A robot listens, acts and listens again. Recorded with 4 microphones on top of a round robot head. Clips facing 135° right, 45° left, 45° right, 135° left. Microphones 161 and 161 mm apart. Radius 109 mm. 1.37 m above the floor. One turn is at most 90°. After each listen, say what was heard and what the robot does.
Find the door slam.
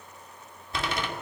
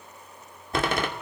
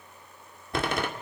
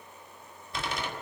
Facing the door slam, 2 to 4 m away.